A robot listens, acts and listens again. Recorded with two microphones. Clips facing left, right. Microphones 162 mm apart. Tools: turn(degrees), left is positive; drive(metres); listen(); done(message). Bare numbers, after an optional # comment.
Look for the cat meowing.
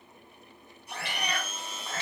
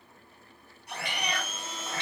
# The cat meowing: about 20° right or 160° right.
turn(-20)
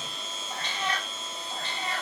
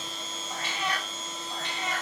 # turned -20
turn(-30)
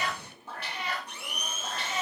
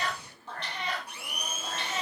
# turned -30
done("Found it: a cat meowing, straight ahead, 2 to 4 m away.")